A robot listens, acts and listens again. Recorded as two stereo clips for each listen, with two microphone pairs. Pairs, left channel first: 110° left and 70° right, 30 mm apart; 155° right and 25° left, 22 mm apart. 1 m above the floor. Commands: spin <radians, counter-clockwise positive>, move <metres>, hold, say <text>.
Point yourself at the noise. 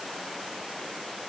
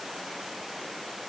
hold
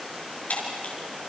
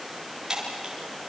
spin 1.48
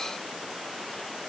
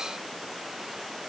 say I heard breaking glass from this way, but can't make it out now.